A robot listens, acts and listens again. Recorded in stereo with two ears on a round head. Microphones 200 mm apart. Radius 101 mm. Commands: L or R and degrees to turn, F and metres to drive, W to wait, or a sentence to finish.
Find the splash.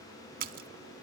R40
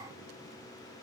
W
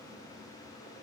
I heard a splash, but can't make it out now. It was about straight ahead or 100° right.